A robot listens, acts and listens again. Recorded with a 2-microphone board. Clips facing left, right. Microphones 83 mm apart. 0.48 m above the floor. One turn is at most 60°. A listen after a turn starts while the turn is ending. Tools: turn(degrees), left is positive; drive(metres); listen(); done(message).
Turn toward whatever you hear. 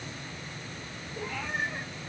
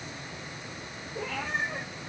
turn(degrees=-60)
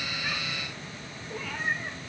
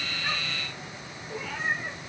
done("Facing the cat meowing, over 4 m away.")